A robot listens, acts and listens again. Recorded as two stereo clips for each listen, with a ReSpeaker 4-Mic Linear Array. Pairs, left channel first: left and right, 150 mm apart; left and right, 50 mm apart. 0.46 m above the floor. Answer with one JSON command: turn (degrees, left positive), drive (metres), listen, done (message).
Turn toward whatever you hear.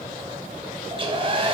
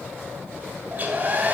{"turn": -35}
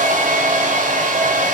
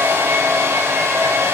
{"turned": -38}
{"turn": -100}
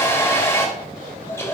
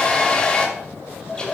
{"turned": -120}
{"turn": 20}
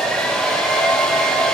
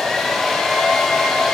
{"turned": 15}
{"done": "Found it: a hair dryer, straight ahead."}